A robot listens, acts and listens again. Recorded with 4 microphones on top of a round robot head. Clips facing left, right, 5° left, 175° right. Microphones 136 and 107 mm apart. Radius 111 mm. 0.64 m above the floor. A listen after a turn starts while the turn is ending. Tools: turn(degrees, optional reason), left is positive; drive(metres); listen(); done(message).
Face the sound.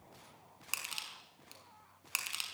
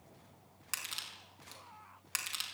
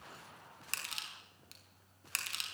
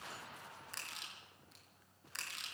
turn(degrees=15, reason="The crushing: 15° left.")
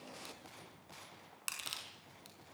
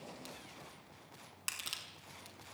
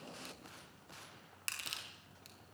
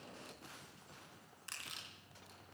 done("Facing the crushing, over 4 m away.")